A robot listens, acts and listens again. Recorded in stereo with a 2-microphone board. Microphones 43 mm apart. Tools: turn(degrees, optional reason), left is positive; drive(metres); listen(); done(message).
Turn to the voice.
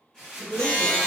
turn(degrees=45, reason="The woman speaking: about 45° left or 135° left.")
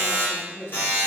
done("Facing the woman speaking, 1 to 2 m away.")